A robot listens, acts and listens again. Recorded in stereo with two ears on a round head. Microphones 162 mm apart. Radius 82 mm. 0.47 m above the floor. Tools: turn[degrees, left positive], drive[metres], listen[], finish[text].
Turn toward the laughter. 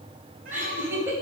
Thought: The laughter: about 15° right or 165° right.
Action: turn[-15]
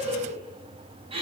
Thought: The laughter: about 35° right or 145° right.
Action: turn[-35]
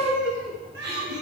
Thought: So it is at 110° right.
Action: turn[-110]
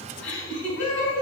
Thought: The laughter is now 10° left.
Action: turn[10]
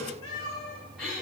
Action: finish[Facing the laughter.]